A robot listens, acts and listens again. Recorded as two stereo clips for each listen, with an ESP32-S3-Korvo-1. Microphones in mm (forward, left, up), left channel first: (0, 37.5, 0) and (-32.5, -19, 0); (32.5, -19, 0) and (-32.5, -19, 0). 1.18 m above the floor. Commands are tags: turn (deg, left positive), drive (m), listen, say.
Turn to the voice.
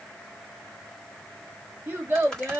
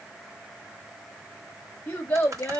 <turn deg="-60"/>
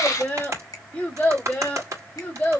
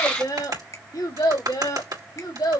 <say>Facing the child speaking, 1 to 2 m away.</say>